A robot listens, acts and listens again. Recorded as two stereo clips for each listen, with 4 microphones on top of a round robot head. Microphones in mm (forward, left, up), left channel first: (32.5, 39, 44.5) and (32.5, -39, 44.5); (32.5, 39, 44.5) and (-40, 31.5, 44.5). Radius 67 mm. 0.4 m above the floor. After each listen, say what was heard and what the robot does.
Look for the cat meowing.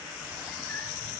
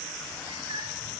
The cat meowing: 165° left. Turn 165° left.
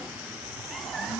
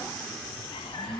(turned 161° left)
Keep listening.
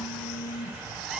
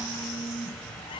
Keep listening.
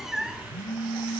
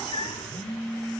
Facing the cat meowing.